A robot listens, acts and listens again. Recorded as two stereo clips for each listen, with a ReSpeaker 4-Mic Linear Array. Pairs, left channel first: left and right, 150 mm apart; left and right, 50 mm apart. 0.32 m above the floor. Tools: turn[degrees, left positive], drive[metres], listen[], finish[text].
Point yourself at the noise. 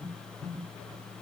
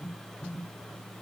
Action: listen[]
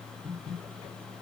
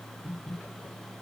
Action: listen[]
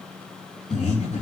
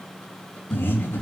Thought: The breathing: about 60° left or 120° left.
Action: turn[60]
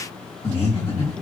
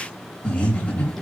Thought: So it is at 50° left.
Action: turn[50]
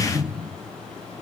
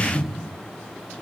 Thought: The breathing is now 10° right.
Action: turn[-10]
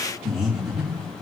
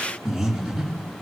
Action: finish[Found it: breathing, straight ahead, 2 to 4 m away.]